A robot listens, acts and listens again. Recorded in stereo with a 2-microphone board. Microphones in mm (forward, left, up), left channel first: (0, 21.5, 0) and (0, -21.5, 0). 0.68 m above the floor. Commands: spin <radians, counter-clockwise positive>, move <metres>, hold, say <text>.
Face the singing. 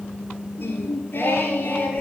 spin 0.70
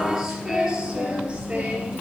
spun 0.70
spin -0.44
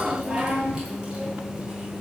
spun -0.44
spin -0.35
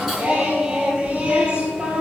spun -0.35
spin -0.35
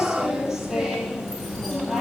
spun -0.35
say Facing the singing, 2 to 4 m away.